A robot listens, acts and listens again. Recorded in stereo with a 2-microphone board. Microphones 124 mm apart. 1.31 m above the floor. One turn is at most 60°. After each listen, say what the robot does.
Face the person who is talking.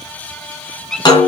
Keep listening.
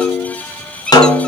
Keep listening.
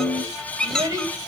Turn 30° right.
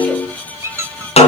Keep listening.
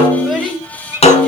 Found it: a child speaking, straight ahead.